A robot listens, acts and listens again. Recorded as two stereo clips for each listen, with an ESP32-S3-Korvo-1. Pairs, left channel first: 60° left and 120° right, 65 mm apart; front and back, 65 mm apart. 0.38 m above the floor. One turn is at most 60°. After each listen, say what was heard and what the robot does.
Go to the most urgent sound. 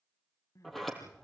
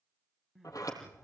The crying: 90° left. Turn 60° left.
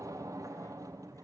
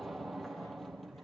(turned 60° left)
Nothing new. It was at 30° left. Turn 30° left.
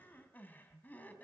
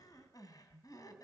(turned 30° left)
Drive 1.0 m forward.
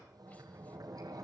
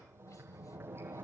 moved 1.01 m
Keep listening.
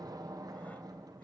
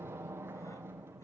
Keep listening.
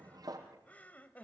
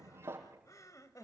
Drive 1.0 m forward.
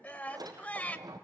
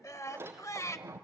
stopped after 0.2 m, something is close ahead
Arrived at the crying, straight ahead.